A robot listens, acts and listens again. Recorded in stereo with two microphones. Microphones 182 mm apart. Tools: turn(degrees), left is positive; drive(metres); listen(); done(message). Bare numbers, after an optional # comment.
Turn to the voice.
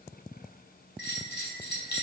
listen()
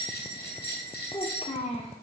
# The child speaking: about 35° left or 145° left.
turn(35)
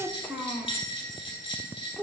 done("Facing the child speaking, 1 to 2 m away.")